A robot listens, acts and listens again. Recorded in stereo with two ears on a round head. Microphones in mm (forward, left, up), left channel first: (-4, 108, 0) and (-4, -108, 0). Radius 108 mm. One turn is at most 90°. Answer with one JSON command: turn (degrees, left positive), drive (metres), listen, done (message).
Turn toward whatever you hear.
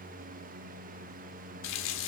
{"turn": 60}
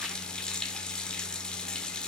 {"done": "Found it: a running tap, straight ahead, 1 to 2 m away."}